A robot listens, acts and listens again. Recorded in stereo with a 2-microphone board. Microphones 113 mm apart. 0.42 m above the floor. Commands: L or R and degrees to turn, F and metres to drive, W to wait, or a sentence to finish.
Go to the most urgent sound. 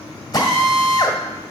W
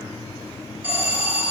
R30
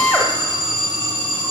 R130
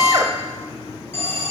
L25
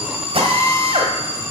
R15
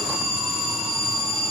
F1.0
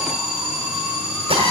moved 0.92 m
R10
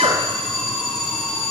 F1.0
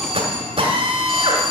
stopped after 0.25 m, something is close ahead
I am next to the alarm.